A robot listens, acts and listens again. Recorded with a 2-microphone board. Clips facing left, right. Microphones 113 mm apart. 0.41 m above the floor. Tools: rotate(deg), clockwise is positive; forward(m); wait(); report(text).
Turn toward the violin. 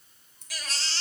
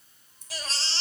wait()
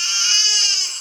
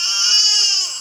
wait()
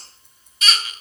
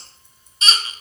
report("I can't make out a violin, only scissors and a baby crying.")